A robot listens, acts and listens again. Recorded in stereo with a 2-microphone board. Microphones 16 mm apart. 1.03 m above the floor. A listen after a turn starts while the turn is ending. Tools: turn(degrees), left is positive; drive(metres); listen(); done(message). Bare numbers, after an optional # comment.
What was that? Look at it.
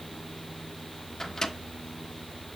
# The microwave: about 35° left or 145° left.
turn(35)
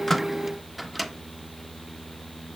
done("Found it: a microwave, straight ahead.")